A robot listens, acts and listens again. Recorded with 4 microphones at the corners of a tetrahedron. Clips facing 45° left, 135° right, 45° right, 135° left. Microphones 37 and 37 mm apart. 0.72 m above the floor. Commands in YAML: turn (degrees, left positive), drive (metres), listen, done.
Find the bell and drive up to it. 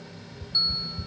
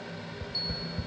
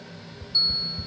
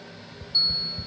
turn: 75
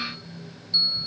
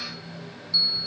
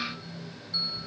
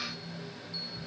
turn: -10
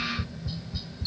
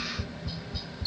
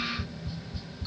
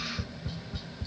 listen: true
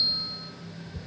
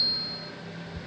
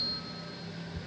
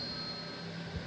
listen: true
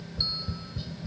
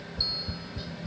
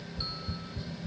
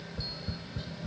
done: "Facing where the bell came from. I can't hear it now. I did not reach it."